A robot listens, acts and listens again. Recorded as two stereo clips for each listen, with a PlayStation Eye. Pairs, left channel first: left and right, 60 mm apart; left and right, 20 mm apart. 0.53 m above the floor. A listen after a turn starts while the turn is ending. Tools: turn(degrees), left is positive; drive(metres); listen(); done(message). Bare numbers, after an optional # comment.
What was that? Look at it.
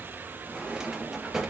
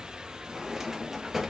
turn(-30)
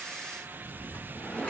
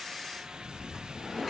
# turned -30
# So it is at 20° left.
turn(20)
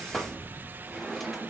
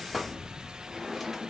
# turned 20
done("Facing the drawer.")